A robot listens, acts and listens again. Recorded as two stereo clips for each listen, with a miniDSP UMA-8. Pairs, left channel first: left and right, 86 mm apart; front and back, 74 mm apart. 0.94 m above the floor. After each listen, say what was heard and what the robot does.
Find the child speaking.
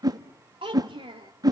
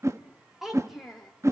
The child speaking: 90° right. Turn 90° right.
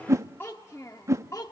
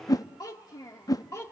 The child speaking is now 45° left. Turn 45° left.
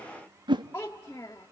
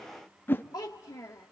The child speaking is now 40° left. Turn 40° left.
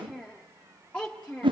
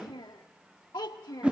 The child speaking is now 15° left. Turn 15° left.
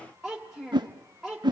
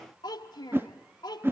Found it: a child speaking, straight ahead.